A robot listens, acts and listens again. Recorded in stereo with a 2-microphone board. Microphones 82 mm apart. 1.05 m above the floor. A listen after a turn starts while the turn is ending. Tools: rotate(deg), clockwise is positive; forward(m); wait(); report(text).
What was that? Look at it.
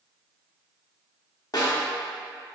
rotate(-50)
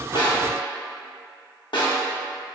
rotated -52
rotate(-75)
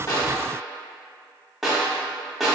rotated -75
report("Found it: a snare drum, straight ahead, under 1 m away.")